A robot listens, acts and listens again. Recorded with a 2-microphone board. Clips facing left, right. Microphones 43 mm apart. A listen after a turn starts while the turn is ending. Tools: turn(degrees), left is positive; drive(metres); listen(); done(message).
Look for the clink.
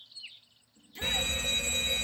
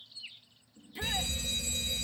listen()
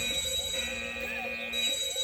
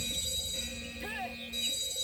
listen()
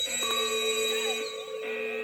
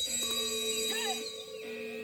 turn(degrees=55)
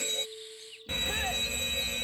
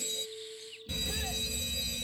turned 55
done("Facing the clink.")